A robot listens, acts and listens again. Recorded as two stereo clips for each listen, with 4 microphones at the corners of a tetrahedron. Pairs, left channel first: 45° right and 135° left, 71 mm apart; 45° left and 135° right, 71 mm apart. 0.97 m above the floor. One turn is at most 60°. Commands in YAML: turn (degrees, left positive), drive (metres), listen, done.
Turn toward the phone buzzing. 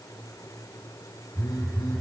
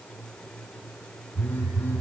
turn: -20
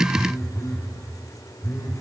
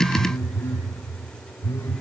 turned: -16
done: "Facing the phone buzzing, over 4 m away."